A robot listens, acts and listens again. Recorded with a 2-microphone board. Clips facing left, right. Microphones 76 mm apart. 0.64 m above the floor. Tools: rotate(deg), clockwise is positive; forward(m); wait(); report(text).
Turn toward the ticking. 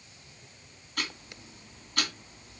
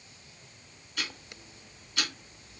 rotate(-50)
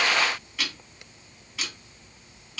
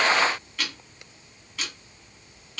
report("Found it: ticking, straight ahead.")